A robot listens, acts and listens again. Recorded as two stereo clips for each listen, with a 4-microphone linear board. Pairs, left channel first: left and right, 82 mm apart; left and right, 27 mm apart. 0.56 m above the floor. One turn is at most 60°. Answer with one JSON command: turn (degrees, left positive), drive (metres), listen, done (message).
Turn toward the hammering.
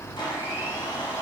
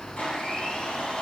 {"listen": true}
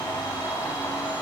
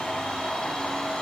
{"listen": true}
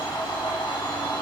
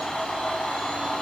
{"done": "I can't make out hammering to turn to."}